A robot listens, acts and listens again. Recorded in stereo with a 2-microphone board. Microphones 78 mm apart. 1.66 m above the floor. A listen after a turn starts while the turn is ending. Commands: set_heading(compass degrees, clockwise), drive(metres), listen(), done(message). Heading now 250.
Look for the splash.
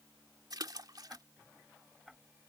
set_heading(320)
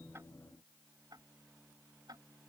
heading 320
listen()
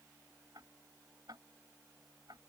done("I heard a splash, but can't make it out now. It was about straight ahead or 40° right.")